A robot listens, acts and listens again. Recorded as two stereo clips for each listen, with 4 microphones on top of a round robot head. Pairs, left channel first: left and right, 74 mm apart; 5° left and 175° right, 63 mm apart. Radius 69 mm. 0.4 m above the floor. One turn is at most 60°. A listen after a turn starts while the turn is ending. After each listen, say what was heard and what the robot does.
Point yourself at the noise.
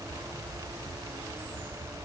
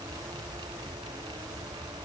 Keep listening.
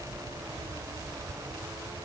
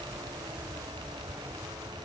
Keep listening.
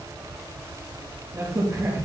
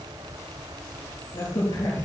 The crack: 35° right. Turn 35° right.
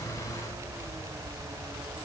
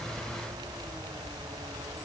Facing where the crack came from. I can't hear it now.